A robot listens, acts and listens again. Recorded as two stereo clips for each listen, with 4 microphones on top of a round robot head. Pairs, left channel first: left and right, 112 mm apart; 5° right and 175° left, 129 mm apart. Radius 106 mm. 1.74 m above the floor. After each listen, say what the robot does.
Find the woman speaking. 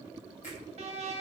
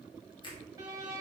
Keep listening.
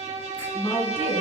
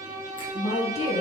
Turn 35° left.
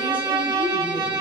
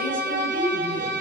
Keep listening.
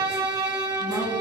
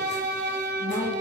Turn 30° left.
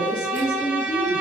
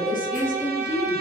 Turn 15° left.
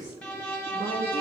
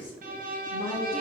Found it: a woman speaking, straight ahead, 2 to 4 m away.